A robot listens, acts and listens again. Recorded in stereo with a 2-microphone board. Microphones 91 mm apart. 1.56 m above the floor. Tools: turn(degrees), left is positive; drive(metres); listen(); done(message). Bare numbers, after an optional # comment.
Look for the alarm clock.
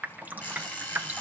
# The alarm clock: about 25° left or 155° left.
turn(25)
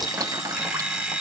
done("Facing the alarm clock.")